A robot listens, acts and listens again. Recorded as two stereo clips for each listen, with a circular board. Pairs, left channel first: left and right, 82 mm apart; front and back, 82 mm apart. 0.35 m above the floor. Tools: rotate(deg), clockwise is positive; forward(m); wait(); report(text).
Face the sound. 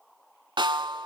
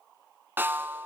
rotate(115)
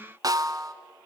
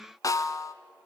rotate(45)
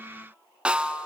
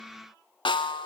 rotate(10)
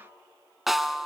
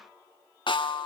report("Found it: a snare drum, straight ahead.")